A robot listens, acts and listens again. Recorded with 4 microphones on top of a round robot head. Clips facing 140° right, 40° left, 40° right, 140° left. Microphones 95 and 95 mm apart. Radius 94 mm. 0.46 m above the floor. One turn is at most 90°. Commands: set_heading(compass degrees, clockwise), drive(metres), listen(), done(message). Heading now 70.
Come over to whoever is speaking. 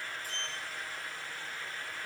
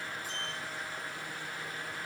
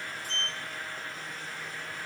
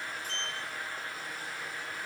listen()
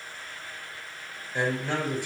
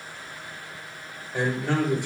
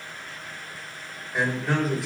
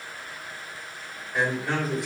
set_heading(20)
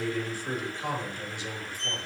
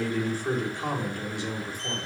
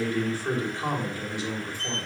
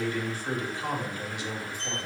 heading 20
set_heading(5)
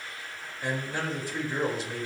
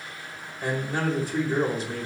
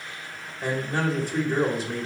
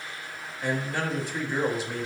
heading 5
drive(1.0)
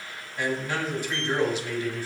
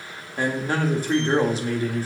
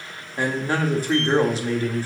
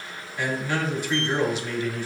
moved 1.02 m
drive(1.0)
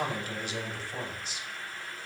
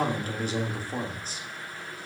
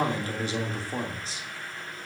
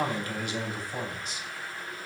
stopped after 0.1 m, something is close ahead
done("Arrived at the man speaking, straight ahead.")